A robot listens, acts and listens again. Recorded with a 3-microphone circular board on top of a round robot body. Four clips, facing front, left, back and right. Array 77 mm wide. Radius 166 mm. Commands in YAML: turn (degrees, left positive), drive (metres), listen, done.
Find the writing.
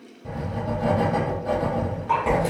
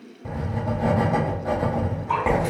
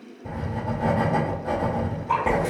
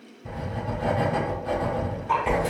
turn: 90
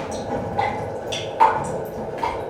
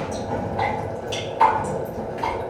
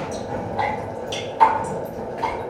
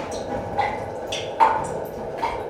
turn: 25
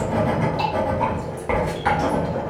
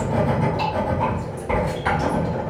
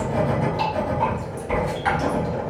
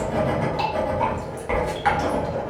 turn: -10
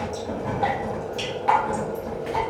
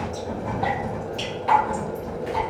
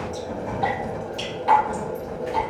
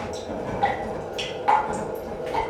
done: "Found it: writing, straight ahead, 1 to 2 m away."